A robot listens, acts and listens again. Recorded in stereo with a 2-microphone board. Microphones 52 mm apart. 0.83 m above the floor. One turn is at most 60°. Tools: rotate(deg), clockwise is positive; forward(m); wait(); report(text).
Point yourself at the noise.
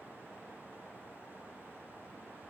wait()
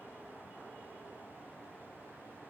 wait()
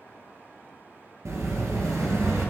rotate(60)
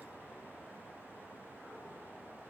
wait()
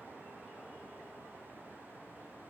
report("I heard an explosion, but can't make it out now. It was about 10° right or 50° right.")